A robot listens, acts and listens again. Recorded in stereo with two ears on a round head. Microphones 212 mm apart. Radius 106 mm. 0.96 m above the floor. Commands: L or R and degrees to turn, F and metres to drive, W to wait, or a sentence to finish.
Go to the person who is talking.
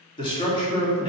L20
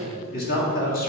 L135
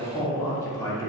L15
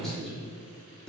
F1.0
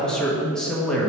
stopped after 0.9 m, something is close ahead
I am next to the man speaking.